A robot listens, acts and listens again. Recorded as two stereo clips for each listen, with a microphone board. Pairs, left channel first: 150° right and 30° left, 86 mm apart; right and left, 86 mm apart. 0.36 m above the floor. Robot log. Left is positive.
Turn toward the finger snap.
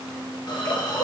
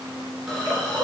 cmd idle
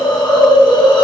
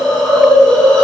cmd idle
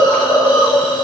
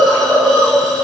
end: I can't make out a finger snap, only a hiss.